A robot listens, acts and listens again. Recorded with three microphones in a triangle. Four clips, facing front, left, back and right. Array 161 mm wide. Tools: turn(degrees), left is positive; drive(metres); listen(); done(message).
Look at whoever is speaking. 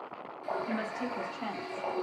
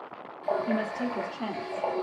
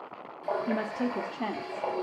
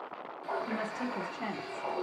turn(degrees=170)
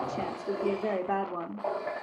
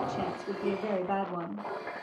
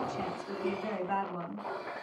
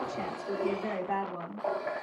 turn(degrees=20)
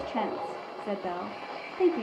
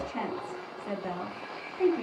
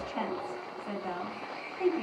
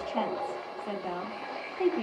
turn(degrees=-10)
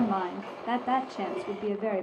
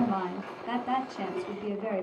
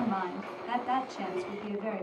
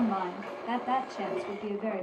done("Found it: a woman speaking, straight ahead, 1 to 2 m away.")